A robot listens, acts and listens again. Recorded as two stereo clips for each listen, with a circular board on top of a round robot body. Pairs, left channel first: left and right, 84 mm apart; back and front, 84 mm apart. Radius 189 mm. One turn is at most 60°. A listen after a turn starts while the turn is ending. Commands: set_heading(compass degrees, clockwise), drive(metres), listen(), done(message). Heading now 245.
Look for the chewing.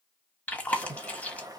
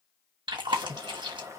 set_heading(225)
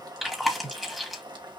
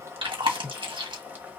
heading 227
done("Found it: chewing, straight ahead, 1 to 2 m away.")